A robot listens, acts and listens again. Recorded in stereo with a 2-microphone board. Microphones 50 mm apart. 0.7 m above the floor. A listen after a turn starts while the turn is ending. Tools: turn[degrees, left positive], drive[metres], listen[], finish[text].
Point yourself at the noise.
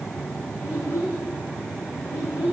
Action: turn[90]
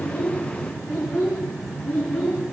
Action: finish[Facing the child speaking.]